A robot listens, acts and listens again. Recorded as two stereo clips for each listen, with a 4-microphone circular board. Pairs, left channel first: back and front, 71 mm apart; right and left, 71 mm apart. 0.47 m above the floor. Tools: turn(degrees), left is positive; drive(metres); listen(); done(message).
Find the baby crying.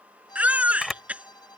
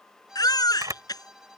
turn(degrees=-70)
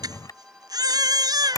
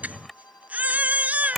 turn(degrees=20)
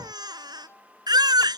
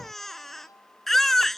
done("Found it: a baby crying, straight ahead.")